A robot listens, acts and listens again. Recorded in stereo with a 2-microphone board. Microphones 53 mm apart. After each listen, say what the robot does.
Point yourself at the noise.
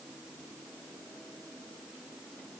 Keep listening.
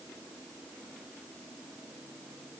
Keep listening.
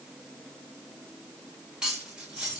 Turn 30° right.
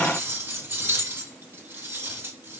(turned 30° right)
Turn 135° right.
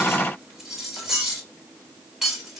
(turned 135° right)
Turn 10° right.
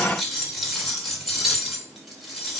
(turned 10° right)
Found it: cutlery clinking, straight ahead.